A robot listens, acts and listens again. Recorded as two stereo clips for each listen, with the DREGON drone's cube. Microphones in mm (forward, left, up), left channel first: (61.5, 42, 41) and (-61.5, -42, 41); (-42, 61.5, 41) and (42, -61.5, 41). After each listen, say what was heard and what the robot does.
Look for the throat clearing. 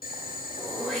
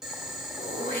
The throat clearing: 120° left. Turn 120° left.
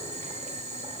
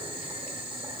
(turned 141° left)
Nothing new. It was at 20° right. Turn 20° right.
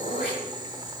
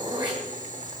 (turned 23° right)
Facing the throat clearing.